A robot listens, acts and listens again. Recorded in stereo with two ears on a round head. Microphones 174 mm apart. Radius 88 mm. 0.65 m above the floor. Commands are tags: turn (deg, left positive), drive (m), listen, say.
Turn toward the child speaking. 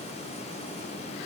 <listen/>
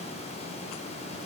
<listen/>
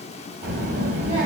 <turn deg="-45"/>
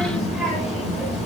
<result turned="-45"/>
<say>Facing the child speaking, 1 to 2 m away.</say>